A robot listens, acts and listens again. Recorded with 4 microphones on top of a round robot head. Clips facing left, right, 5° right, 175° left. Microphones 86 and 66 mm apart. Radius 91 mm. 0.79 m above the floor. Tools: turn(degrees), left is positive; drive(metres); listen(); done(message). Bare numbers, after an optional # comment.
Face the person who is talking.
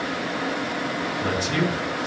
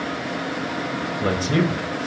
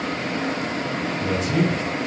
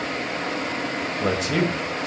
# The man speaking: 145° right.
turn(-145)
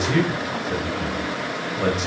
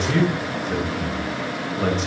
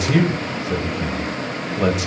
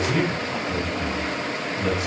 done("Facing the man speaking.")